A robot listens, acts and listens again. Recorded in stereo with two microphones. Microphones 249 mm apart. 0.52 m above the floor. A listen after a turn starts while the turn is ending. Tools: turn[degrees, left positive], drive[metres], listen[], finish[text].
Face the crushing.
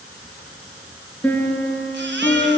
Action: listen[]
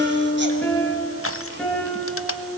Thought: The crushing: about 65° left or 115° left.
Action: turn[65]
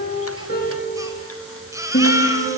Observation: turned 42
Action: listen[]
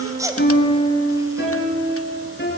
Action: listen[]
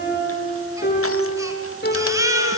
Action: finish[I heard crushing, but can't make it out now. It was about 25° left or 75° left.]